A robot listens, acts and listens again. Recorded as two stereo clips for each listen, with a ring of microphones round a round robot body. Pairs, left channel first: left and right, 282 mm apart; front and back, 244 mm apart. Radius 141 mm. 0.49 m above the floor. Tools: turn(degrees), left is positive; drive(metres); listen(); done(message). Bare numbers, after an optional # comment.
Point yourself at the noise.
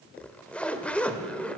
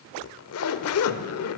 done("Found it: a zipper, straight ahead.")